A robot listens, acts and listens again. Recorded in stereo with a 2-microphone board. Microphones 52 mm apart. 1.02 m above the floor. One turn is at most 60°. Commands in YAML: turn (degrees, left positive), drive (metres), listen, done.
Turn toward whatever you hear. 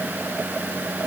listen: true
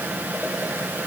listen: true
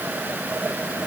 done: "I can't make out anything."